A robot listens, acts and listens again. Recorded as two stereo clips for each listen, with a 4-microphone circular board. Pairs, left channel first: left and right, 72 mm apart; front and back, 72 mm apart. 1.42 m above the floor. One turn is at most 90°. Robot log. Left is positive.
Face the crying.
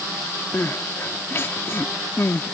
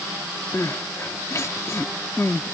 note: The crying: 40° left.
cmd yaw +40
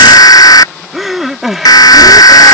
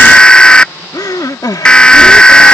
end: Found it: crying, straight ahead.